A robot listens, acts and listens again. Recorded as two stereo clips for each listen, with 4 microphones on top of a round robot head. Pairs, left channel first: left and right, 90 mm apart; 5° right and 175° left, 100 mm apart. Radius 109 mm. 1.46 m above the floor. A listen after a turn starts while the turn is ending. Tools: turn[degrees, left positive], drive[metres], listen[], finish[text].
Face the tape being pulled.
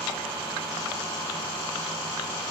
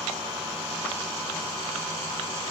Action: listen[]
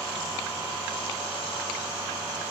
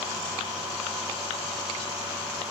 Action: listen[]
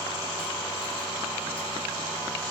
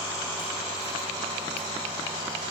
Action: finish[I can't make out tape being pulled to turn to.]